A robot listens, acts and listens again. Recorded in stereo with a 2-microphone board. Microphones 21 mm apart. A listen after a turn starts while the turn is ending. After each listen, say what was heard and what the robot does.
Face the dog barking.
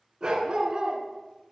The dog barking: about 25° right or 155° right. Turn 25° right.
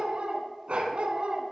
So it is at 125° right. Turn 125° right.
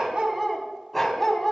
Found it: a dog barking, straight ahead, 1 to 2 m away.